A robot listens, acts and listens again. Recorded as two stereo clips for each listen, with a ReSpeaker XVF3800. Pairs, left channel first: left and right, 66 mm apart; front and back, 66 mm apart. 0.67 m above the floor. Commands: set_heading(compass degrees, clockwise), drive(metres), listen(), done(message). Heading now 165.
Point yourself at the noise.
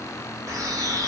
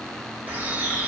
set_heading(280)
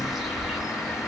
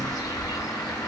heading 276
done("Facing the bird.")